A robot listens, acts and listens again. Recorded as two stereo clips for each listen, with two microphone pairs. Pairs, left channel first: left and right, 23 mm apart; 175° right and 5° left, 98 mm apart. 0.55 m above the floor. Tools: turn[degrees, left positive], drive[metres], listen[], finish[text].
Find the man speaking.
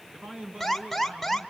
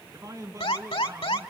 Thought: The man speaking: 55° right.
Action: turn[-55]
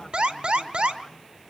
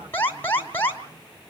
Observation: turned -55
Action: listen[]
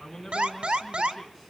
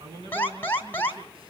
Action: finish[Found it: a man speaking, straight ahead, over 4 m away.]